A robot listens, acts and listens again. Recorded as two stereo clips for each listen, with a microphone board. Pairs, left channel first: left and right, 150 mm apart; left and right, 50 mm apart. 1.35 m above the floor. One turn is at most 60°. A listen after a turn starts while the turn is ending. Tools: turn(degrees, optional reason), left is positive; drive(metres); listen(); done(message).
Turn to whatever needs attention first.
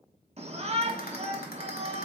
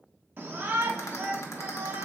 turn(degrees=-45, reason="The shout: about 45° right or 135° right.")
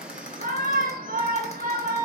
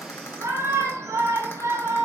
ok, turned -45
turn(degrees=-60, reason="So it is at 90° right.")
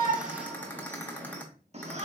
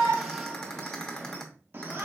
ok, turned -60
turn(degrees=-50, reason="The shout is now 50° right.")
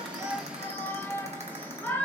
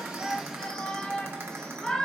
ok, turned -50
turn(degrees=15, reason="The shout is now 15° left.")
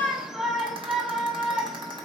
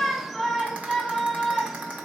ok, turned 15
done("Found it: a shout, straight ahead.")